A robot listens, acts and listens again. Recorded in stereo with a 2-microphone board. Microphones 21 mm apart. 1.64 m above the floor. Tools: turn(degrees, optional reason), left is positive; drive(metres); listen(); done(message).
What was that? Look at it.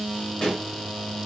turn(degrees=40, reason="The pop: about 40° left or 140° left.")
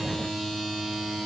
listen()
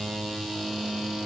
done("I heard a pop, but can't make it out now. It was about straight ahead or 100° left.")